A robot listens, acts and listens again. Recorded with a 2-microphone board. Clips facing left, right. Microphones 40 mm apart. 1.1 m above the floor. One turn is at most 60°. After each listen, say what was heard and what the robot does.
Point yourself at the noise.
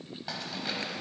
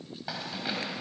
Turn 30° right.
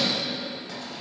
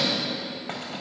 Keep listening.
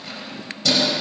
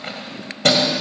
So it is at 125° right. Turn 60° right.
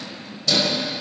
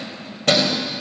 The keys jangling is now 55° right. Turn 55° right.
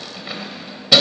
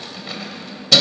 The keys jangling is now 15° left. Turn 15° left.
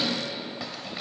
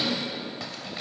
Keep listening.
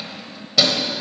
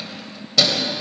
Found it: keys jangling, straight ahead.